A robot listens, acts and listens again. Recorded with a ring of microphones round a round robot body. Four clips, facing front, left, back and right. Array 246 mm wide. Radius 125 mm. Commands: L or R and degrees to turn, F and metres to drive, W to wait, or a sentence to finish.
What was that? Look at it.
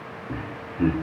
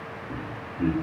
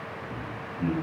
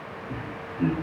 R10
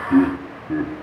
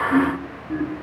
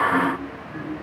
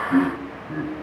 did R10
Found it: laughter, straight ahead, 1 to 2 m away.